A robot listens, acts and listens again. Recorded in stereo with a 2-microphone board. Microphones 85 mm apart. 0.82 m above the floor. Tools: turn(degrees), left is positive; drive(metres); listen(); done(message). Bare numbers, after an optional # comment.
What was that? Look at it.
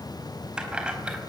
turn(-30)
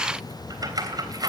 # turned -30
# So it is at 130° right.
turn(-130)
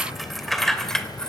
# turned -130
# The keys jangling is now 10° left.
turn(10)
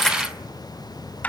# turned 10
# The keys jangling is now 20° left.
turn(20)
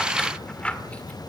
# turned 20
# The keys jangling is now 15° left.
turn(15)
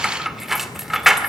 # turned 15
done("Found it: keys jangling, straight ahead.")